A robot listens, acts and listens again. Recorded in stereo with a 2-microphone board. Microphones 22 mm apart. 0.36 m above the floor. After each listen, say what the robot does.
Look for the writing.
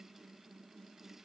Keep listening.
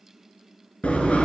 Turn 90° left.
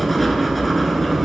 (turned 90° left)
Facing the writing, under 1 m away.